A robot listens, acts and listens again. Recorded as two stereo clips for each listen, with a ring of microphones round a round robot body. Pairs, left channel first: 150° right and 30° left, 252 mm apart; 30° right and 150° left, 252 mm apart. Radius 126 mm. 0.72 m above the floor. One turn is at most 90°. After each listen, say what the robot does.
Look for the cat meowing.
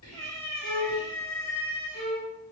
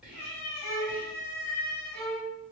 Turn 35° right.
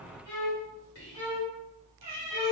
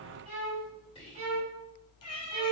Turn 10° right.
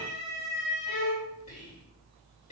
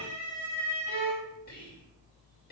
Found it: a cat meowing, straight ahead.